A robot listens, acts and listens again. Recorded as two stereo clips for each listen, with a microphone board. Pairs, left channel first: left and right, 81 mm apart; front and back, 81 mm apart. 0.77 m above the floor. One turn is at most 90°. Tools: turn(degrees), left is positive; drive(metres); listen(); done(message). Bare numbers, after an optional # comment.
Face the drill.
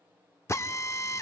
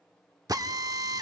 # The drill: 145° left.
turn(90)
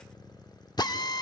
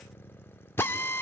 # The drill is now 60° left.
turn(60)
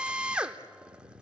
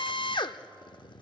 # The drill is now 10° right.
turn(-10)
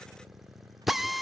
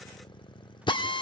done("Found it: a drill, straight ahead, under 1 m away.")